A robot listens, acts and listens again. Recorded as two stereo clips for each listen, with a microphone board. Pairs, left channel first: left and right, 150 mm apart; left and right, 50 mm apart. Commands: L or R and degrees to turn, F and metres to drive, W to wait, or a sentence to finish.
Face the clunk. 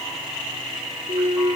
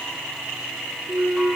R40
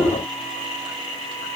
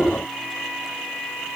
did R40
W
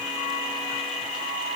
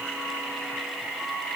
I heard a clunk, but can't make it out now. It was about straight ahead or 100° right.